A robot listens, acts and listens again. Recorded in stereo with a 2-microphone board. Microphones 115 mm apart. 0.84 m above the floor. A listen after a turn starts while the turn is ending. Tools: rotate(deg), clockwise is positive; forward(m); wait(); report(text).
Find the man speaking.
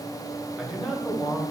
rotate(30)
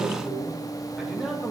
rotate(30)
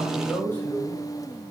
rotate(-15)
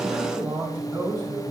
rotate(25)
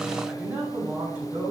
rotate(20)
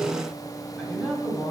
report("Found it: a man speaking, straight ahead, 2 to 4 m away.")